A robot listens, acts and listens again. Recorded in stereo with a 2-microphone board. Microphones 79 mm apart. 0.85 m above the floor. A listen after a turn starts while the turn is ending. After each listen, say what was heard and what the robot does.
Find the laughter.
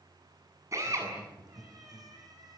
Turn 90° right.
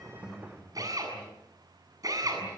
Facing the laughter.